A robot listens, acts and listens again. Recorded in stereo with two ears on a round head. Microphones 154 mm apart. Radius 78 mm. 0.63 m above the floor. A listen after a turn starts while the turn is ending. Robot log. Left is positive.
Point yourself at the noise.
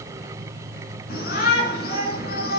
note: The shout: about 60° left or 120° left.
cmd yaw +60
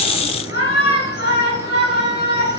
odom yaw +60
note: So it is at 60° left.
cmd yaw +60
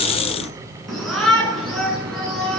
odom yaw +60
end: Found it: a shout, straight ahead, over 4 m away.